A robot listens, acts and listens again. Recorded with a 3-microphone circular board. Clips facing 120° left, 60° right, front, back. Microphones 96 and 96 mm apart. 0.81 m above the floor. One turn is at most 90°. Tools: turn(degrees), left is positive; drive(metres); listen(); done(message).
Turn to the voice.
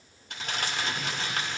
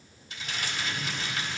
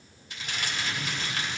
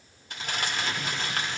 listen()
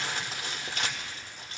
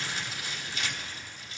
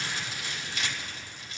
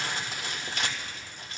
listen()
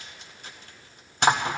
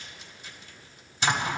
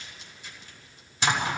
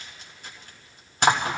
done("I can't make out anyone speaking to turn to.")